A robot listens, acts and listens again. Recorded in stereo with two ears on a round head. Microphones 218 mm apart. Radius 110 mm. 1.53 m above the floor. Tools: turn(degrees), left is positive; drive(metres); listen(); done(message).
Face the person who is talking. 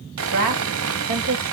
turn(degrees=-70)
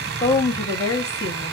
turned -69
turn(degrees=15)
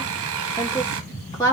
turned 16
turn(degrees=15)
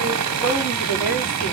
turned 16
done("Found it: a woman speaking, straight ahead.")